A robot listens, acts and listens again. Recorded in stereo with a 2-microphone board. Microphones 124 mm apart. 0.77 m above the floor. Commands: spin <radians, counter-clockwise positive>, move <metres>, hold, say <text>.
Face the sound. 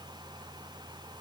hold
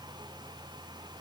hold
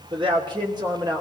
spin -0.52
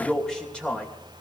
spin 0.17
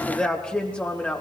spin 0.17
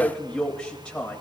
say Facing the man speaking, 2 to 4 m away.